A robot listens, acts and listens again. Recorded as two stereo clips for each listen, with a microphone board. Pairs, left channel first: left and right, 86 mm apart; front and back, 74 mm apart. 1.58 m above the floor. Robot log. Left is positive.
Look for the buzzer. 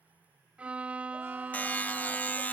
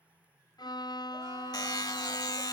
note: The buzzer: 20° left.
cmd yaw +20
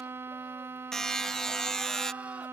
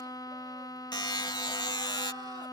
note: The buzzer is now 10° left.
cmd yaw +10
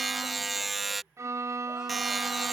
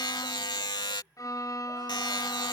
end: Found it: a buzzer, straight ahead.